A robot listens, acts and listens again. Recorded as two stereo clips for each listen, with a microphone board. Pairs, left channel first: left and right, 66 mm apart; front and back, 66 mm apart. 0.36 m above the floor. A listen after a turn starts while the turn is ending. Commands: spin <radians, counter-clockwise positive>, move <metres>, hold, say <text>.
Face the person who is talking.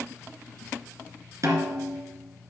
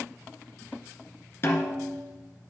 hold
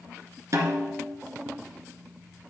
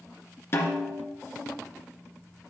hold
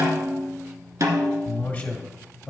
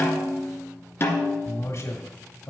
spin 0.52
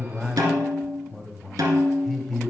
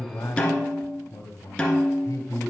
say Facing the man speaking.